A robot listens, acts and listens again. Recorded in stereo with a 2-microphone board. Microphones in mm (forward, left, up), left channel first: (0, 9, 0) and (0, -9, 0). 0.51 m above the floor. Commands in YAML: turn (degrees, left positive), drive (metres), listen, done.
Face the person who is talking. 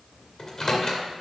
listen: true
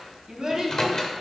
turn: -40
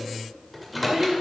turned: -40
turn: -110
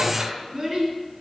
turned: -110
turn: -30
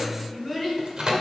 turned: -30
done: "Found it: a child speaking, straight ahead, over 4 m away."